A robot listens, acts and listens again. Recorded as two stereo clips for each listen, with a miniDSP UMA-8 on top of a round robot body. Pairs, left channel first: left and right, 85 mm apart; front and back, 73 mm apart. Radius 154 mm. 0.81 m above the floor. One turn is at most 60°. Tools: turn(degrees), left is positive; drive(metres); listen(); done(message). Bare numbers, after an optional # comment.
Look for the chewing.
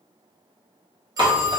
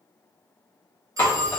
# The chewing: 60° right.
turn(-60)
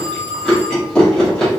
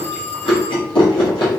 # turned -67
done("Found it: chewing, straight ahead, 1 to 2 m away.")